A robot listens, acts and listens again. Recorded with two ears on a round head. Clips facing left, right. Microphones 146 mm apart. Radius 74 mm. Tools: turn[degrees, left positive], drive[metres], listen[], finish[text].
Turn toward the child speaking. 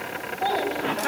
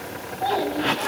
Action: turn[30]
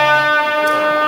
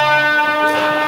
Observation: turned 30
Action: listen[]
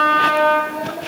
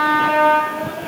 Action: listen[]
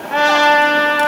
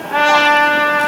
Action: finish[I heard a child speaking, but can't make it out now. It was about 15° right or 135° left.]